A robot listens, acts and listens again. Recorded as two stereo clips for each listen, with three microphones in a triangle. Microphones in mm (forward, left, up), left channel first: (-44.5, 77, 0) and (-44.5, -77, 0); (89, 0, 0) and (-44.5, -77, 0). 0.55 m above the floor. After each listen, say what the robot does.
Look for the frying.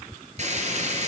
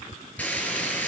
Turn 50° right.
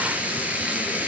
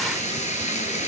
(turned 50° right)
Turn 10° right.
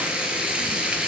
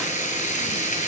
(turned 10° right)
Found it: frying, straight ahead.